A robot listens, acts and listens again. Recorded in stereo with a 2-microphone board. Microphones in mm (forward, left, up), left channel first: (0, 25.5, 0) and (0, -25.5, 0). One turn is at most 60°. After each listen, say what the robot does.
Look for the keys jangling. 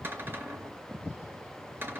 Keep listening.
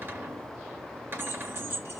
Turn 55° right.
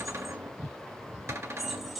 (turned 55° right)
Facing the keys jangling.